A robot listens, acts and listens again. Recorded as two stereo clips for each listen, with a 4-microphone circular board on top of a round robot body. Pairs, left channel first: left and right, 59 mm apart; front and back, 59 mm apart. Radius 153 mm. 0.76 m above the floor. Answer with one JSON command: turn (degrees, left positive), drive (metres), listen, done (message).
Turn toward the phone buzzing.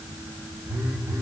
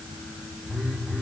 {"turn": -90}
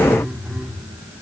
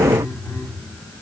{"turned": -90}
{"done": "Found it: a phone buzzing, straight ahead, 2 to 4 m away."}